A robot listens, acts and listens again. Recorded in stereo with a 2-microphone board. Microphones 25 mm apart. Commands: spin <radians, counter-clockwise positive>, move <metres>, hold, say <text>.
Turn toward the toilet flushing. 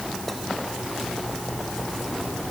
hold
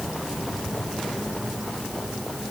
hold
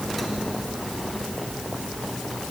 say I can't make out a toilet flushing.